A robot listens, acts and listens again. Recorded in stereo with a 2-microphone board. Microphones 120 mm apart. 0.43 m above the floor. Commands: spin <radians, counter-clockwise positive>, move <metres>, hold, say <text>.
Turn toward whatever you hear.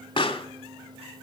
spin 0.79
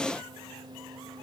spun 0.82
hold
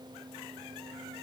say I heard a pop, but can't make it out now. It was about straight ahead or 85° left.